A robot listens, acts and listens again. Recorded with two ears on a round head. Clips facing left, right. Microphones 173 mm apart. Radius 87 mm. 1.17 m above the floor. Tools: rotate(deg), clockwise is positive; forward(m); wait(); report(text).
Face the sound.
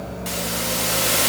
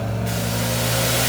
rotate(-70)
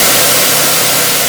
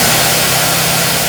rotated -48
rotate(-60)
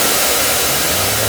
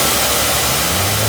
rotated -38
rotate(-25)
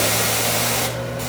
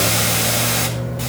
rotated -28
report("Facing the hiss, 2 to 4 m away.")